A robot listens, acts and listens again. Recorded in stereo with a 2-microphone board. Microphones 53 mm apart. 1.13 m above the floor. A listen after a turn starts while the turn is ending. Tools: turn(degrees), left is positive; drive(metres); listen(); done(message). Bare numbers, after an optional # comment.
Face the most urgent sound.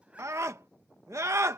# The scream: about 70° right or 110° right.
turn(-70)
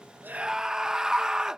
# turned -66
# So it is at 15° right.
turn(-15)
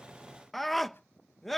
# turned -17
done("Found it: a scream, straight ahead.")